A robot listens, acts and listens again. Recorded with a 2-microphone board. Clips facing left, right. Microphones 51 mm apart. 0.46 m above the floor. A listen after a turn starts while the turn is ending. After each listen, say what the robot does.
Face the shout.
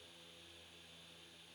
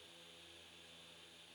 Keep listening.
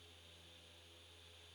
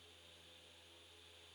Keep listening.
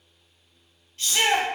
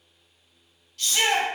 Turn 35° left.
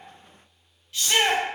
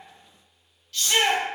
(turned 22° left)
Turn 20° left.
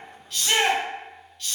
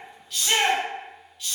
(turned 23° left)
Found it: a shout, straight ahead, 1 to 2 m away.